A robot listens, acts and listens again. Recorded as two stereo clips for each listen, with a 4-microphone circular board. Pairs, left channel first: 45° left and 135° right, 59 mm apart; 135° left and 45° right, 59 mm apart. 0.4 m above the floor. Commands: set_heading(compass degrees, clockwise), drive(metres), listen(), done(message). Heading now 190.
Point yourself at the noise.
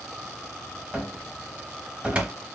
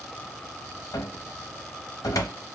set_heading(40)
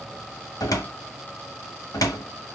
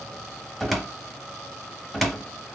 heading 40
set_heading(355)
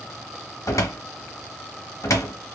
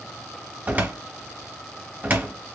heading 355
set_heading(340)
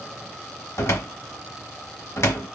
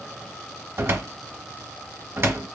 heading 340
done("Facing the cupboard door, 1 to 2 m away.")